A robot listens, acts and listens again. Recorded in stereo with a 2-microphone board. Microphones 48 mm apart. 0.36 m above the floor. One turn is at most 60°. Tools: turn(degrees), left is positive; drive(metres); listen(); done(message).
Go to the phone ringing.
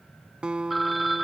turn(degrees=30)
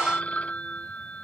turn(degrees=60)
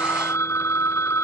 turn(degrees=60)
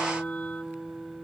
turn(degrees=40)
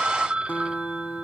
turn(degrees=-20)
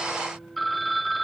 drive(metres=1.0)
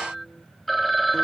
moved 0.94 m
drive(metres=1.0)
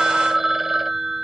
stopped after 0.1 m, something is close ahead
turn(degrees=-10)
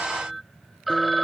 done("I am next to the phone ringing.")